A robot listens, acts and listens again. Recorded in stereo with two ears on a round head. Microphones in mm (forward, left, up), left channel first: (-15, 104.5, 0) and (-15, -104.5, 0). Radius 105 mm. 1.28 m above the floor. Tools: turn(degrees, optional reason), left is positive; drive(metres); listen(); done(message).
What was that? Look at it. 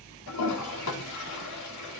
turn(degrees=90)
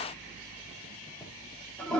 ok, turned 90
done("Found it: a toilet flushing, straight ahead.")